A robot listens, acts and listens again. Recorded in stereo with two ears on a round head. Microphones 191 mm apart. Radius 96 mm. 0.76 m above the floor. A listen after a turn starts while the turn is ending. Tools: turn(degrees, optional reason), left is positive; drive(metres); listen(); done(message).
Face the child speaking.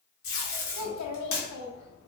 turn(degrees=90)
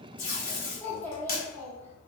turn(degrees=10, reason="So it is at 10° left.")
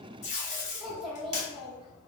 done("Found it: a child speaking, straight ahead, under 1 m away.")